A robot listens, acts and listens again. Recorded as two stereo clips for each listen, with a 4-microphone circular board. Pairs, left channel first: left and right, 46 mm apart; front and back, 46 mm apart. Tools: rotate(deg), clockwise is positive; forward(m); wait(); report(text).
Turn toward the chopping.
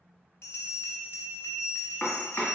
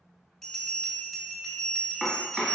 rotate(-115)
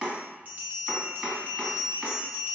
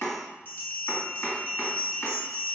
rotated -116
report("Found it: chopping, straight ahead, 1 to 2 m away.")